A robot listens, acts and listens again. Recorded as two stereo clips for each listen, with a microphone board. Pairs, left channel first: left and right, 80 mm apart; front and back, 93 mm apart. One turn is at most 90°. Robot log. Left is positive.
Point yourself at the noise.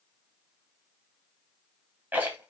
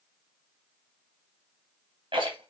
note: The rattle: 160° right.
cmd yaw -90
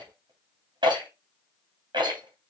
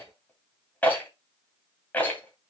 note: The rattle is now 75° right.
cmd yaw -75
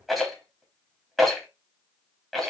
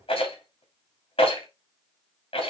end: Found it: a rattle, straight ahead.